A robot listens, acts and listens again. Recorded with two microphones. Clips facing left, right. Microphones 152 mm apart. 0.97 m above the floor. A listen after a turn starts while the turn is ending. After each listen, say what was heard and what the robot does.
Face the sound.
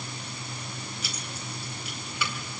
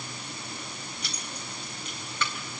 Turn 30° left.
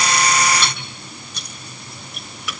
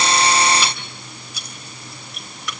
Turn 30° left.
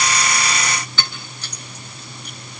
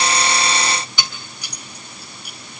So it is at 15° right. Turn 15° right.
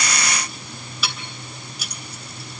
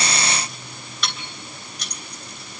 Found it: keys jangling, straight ahead, 2 to 4 m away.